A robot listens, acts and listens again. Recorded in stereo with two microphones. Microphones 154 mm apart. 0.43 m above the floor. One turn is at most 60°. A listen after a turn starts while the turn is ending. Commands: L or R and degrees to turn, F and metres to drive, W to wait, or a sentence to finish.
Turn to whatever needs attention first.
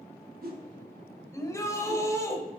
L20
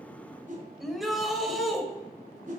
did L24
Facing the shout, 1 to 2 m away.